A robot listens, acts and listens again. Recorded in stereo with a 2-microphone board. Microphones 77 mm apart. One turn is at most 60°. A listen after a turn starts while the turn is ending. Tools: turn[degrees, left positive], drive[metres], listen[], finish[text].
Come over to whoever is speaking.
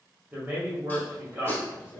Thought: The man speaking: about 25° right or 155° right.
Action: turn[-25]
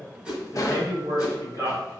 Thought: So it is at 125° right.
Action: turn[-60]
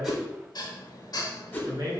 Thought: The man speaking is now 90° right.
Action: turn[-60]
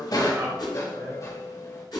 Thought: Nothing new. It was at 30° right.
Action: turn[-30]
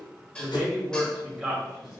Thought: The man speaking is now 10° right.
Action: turn[-10]
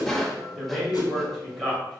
Action: drive[1.0]
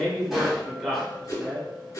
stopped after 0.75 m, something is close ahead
Action: finish[Arrived at the man speaking, straight ahead.]